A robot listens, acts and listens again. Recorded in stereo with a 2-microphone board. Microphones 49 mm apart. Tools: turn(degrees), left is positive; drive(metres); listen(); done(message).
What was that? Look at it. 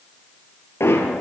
turn(degrees=65)
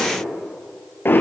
turn(degrees=50)
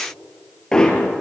turn(degrees=15)
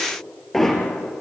done("Facing the hammering.")